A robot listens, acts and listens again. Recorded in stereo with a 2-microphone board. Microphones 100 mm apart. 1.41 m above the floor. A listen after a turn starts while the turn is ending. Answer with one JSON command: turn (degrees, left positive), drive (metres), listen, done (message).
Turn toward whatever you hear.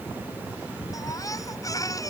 {"turn": 35}
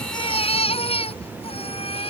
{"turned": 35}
{"turn": 110}
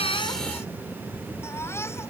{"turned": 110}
{"turn": 25}
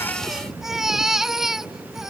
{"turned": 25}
{"done": "Found it: a baby crying, straight ahead."}